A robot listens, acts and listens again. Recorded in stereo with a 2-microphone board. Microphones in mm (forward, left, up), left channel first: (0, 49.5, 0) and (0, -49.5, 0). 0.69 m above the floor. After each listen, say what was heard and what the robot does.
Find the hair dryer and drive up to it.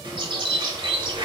Keep listening.
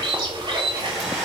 Turn 30° right.
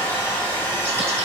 So it is at 25° left. Turn 25° left.
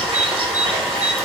Drive 1.0 m forward.
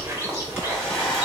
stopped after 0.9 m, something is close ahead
The hair dryer is now 10° left. Turn 10° left.
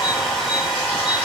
Arrived at the hair dryer, straight ahead.